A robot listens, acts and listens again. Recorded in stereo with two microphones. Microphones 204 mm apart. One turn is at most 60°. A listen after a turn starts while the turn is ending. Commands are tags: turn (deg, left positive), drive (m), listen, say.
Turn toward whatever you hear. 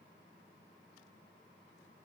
<listen/>
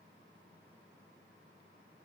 <listen/>
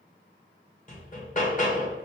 <turn deg="40"/>
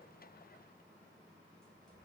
<listen/>
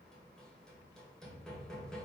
<say>Found it: hammering, straight ahead.</say>